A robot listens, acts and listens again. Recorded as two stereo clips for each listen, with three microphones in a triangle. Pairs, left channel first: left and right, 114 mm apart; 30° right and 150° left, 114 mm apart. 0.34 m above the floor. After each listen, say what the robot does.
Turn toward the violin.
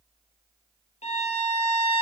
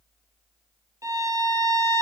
Turn 90° left.
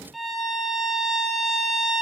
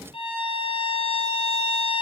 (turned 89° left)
Facing the violin, 1 to 2 m away.